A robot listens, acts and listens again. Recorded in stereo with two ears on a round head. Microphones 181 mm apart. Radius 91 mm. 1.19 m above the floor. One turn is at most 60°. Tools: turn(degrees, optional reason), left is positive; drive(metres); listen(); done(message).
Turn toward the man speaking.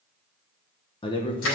turn(degrees=25, reason="The man speaking: about 25° left or 155° left.")
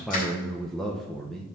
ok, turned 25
done("Found it: a man speaking, straight ahead.")